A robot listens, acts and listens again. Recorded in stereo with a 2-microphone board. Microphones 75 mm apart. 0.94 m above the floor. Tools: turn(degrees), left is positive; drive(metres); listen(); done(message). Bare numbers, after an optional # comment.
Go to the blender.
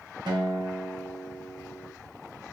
listen()
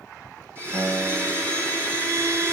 # The blender: about 30° right or 150° right.
turn(-30)
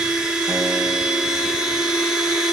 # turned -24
# So it is at 10° right.
turn(-10)
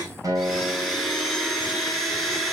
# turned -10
drive(1.0)
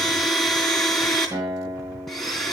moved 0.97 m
drive(1.0)
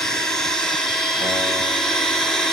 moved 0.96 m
# The blender is now 10° left.
turn(10)
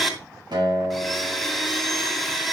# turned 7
drive(1.0)
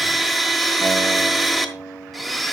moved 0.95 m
drive(1.0)
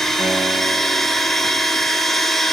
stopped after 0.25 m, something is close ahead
done("I am next to the blender.")